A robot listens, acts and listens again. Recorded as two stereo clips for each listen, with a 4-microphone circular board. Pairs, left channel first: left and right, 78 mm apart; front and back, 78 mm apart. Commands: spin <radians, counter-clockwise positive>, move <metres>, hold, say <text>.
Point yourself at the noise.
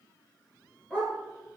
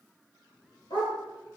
spin 0.17
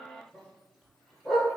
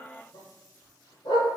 say Facing the dog barking.